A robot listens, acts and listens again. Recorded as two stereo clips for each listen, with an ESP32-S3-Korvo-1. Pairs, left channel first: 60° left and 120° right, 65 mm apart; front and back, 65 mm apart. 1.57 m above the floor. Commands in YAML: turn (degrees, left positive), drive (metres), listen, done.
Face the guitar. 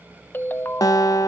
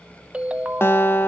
turn: 55
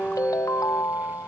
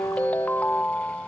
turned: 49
done: "Found it: a guitar, straight ahead, 1 to 2 m away."